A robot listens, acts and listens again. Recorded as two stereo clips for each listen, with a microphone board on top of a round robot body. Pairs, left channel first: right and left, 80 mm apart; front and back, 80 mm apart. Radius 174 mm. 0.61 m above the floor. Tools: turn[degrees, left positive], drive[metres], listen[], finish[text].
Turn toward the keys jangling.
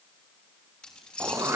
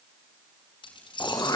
Thought: The keys jangling: 10° right.
Action: turn[-10]
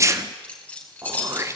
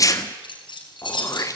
Thought: The keys jangling is now 20° right.
Action: turn[-20]
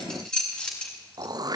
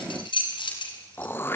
Thought: The keys jangling is now 10° right.
Action: turn[-10]
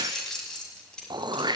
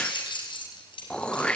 Thought: The keys jangling is now 10° right.
Action: turn[-10]
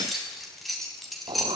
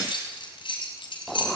Action: finish[Facing the keys jangling.]